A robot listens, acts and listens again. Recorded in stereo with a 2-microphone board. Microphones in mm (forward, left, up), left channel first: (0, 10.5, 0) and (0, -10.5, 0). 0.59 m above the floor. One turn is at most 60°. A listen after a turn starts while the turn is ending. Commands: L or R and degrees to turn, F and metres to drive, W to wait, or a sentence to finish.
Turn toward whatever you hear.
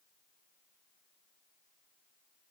W
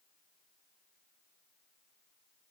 W
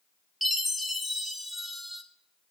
L30
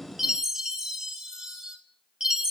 R30
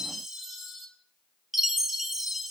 R15
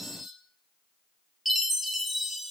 Found it: a chime, straight ahead, 1 to 2 m away.